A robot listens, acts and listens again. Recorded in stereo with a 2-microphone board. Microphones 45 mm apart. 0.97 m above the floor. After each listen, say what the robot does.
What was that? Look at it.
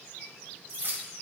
Turn 60° right.
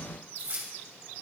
Turn 55° right.
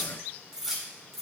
Found it: keys jangling, straight ahead, 2 to 4 m away.